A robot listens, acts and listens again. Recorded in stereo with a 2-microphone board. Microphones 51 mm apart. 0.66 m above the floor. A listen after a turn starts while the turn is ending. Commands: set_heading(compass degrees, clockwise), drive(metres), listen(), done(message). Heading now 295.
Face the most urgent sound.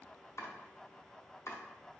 listen()
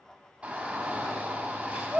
set_heading(320)
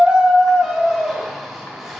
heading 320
done("Found it: a shout, straight ahead.")